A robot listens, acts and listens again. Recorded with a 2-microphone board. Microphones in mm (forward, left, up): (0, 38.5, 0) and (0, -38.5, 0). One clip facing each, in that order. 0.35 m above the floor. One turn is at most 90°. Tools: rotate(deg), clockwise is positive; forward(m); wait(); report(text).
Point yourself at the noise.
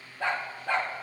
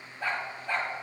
rotate(-90)
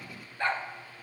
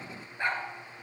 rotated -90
rotate(20)
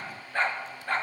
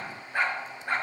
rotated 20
rotate(20)
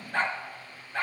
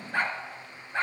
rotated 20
rotate(25)
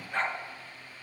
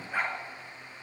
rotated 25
rotate(10)
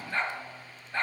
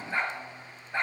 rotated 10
rotate(15)
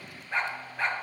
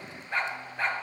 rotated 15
report("Found it: a dog barking, straight ahead.")